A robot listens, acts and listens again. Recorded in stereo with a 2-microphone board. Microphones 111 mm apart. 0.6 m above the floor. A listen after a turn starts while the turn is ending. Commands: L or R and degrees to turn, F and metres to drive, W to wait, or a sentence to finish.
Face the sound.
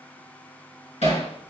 L90
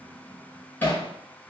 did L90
L15
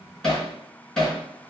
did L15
Found it: hammering, straight ahead.